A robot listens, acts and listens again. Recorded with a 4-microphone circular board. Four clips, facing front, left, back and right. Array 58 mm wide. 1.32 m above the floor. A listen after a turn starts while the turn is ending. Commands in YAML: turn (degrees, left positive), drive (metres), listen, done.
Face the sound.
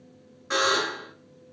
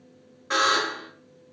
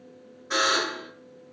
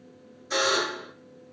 turn: 70
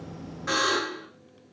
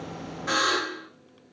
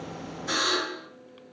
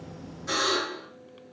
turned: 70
turn: 40
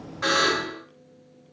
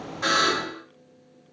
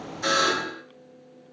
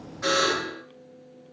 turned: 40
turn: 10
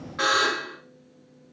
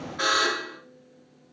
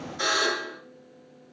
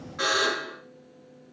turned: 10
done: "Found it: a buzzer, straight ahead."